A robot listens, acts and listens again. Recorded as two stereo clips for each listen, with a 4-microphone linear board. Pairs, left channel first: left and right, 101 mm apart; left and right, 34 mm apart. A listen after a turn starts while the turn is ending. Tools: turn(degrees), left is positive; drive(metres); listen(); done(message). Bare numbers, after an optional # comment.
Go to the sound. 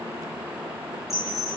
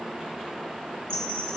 # The chime: about 30° left or 150° left.
turn(30)
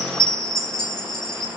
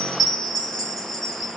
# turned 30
drive(1.0)
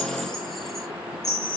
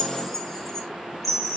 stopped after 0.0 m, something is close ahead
done("Blocked. The chime is further on, straight ahead.")